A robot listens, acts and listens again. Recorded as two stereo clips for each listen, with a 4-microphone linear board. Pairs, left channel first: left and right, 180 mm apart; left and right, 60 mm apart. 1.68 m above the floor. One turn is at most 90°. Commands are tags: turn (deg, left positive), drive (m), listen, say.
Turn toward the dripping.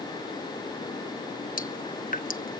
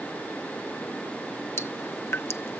<turn deg="50"/>
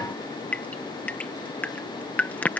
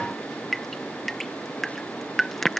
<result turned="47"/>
<turn deg="10"/>
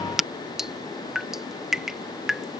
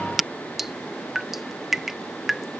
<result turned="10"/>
<say>Facing the dripping.</say>